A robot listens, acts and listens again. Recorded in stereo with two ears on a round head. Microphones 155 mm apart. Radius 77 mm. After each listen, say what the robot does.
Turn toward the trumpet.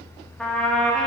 Turn 30° left.
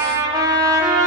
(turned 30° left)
Turn 25° right.
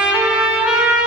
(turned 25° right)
Found it: a trumpet, straight ahead, under 1 m away.